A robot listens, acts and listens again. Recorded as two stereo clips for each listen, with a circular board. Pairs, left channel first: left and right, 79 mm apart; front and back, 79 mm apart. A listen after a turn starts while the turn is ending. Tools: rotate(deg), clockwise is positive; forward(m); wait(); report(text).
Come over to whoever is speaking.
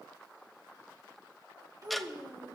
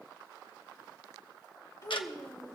rotate(45)
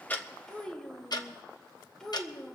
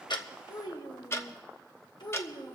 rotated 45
rotate(-10)
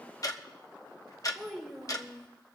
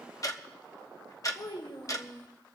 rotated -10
forward(1.0)
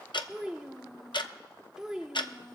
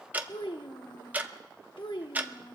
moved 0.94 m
rotate(10)
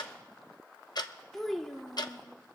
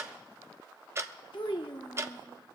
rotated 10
forward(1.0)
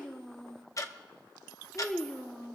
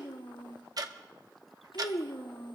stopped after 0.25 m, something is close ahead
rotate(-10)
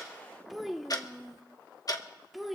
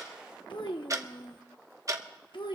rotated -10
report("Arrived at the child speaking, straight ahead.")